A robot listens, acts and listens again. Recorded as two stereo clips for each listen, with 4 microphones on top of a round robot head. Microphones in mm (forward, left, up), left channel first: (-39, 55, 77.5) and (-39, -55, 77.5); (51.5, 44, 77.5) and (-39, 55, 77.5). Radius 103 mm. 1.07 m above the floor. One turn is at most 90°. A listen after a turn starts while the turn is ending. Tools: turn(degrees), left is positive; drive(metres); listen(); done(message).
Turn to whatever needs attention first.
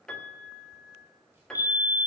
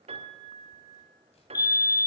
turn(degrees=35)
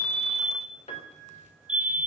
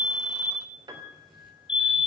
turn(degrees=-10)
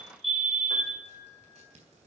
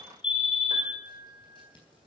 done("Found it: a fire alarm, straight ahead, 2 to 4 m away.")